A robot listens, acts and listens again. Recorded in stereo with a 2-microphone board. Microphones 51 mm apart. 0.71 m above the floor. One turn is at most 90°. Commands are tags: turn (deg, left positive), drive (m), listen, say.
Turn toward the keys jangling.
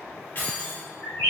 <turn deg="45"/>
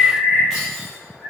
<listen/>
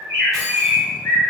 <listen/>
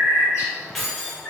<say>Found it: keys jangling, straight ahead.</say>